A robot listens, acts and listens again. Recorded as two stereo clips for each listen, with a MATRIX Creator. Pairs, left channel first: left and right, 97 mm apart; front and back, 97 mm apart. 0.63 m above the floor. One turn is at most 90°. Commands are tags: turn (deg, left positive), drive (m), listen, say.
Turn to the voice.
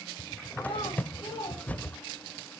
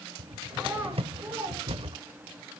<turn deg="90"/>
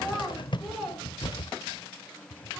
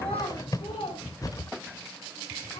<say>Found it: a child speaking, straight ahead, over 4 m away.</say>